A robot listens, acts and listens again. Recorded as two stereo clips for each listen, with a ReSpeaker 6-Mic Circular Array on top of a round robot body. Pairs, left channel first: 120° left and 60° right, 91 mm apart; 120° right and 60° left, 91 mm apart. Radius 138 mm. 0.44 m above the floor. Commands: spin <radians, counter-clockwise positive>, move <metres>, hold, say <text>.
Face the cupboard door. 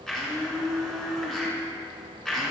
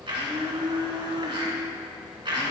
hold
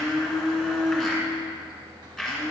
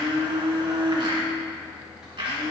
hold
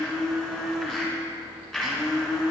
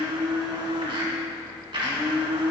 say I can't make out a cupboard door to turn to.